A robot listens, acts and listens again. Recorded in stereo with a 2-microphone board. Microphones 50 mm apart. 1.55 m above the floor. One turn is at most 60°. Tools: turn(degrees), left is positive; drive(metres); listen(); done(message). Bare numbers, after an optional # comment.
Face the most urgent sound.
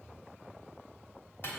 listen()
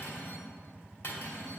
listen()
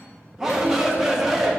turn(-30)
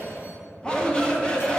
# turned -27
# So it is at 20° left.
turn(20)
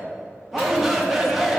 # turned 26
done("Found it: a shout, straight ahead, 1 to 2 m away.")